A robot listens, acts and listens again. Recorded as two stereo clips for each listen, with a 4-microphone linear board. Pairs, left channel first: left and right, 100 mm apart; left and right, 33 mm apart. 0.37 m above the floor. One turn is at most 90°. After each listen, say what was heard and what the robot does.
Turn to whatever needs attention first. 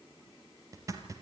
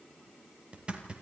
Keep listening.
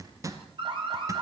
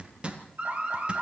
The alarm: about 55° right or 125° right. Turn 55° right.
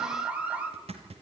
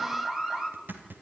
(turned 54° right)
So it is at 15° right. Turn 15° right.
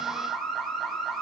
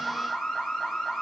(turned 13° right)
Found it: an alarm, straight ahead, 2 to 4 m away.